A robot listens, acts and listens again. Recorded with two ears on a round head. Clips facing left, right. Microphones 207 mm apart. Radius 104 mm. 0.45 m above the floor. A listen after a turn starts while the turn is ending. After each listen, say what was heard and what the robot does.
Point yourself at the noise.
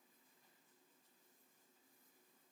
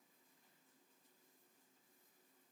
Keep listening.
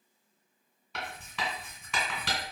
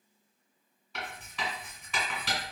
The writing: about 65° left or 115° left. Turn 65° left.
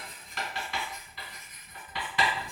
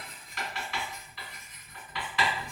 So it is at 35° left. Turn 35° left.
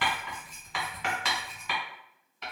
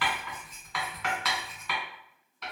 The writing is now 10° left. Turn 10° left.
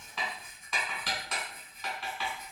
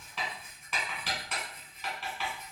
Found it: writing, straight ahead.